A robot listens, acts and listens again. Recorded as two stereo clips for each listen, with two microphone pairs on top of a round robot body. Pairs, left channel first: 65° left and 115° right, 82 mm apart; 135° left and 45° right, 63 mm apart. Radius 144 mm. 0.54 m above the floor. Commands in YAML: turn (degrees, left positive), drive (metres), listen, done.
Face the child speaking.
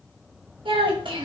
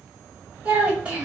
turn: -120
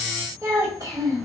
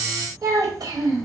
turn: -70
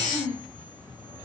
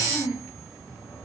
done: "Found it: a child speaking, straight ahead."